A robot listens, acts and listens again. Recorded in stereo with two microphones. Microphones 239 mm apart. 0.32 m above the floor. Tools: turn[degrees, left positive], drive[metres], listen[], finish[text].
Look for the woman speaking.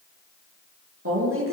Thought: The woman speaking: about 65° right or 115° right.
Action: turn[-65]
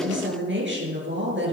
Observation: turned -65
Thought: So it is at 50° right.
Action: turn[-50]
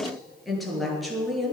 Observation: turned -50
Action: finish[Facing the woman speaking.]